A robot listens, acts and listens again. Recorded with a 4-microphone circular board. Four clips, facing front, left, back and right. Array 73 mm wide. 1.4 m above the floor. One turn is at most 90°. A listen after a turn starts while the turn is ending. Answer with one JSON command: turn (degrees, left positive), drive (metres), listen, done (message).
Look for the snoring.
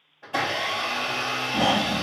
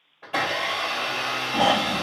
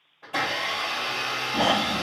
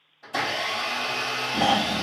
{"turn": 90}
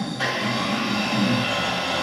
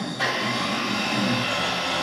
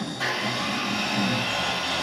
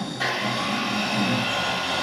{"turn": 55}
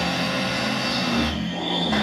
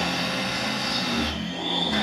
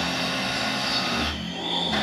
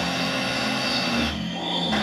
{"done": "Found it: snoring, straight ahead."}